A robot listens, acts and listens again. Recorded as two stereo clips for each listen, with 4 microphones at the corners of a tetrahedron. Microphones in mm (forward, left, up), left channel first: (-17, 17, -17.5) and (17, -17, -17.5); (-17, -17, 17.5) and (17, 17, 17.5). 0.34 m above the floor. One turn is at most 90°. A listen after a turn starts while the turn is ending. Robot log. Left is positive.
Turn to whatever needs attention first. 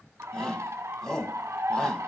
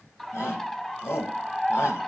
note: The shout: 150° right.
cmd yaw -90
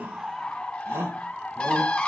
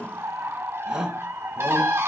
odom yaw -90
note: The shout is now 30° right.
cmd yaw -30
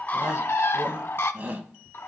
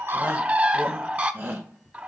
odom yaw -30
end: Facing the shout, 1 to 2 m away.